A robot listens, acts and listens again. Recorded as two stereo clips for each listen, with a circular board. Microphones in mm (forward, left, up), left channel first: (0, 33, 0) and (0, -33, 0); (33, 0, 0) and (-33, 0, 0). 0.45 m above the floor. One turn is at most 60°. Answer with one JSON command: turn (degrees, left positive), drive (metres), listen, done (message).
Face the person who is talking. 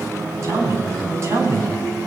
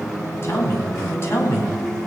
{"turn": -50}
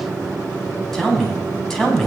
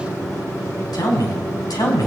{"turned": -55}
{"done": "Found it: a man speaking, straight ahead."}